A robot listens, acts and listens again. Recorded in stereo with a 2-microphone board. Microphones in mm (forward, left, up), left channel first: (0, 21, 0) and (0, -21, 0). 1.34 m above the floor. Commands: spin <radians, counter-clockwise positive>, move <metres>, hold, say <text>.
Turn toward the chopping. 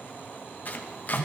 spin 0.70
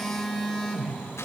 hold
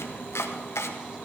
spin 1.75
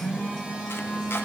hold
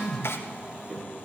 spin 1.13
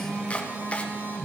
spin 0.52
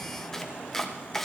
spin 0.17
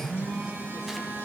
hold
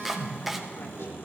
say Found it: chopping, straight ahead.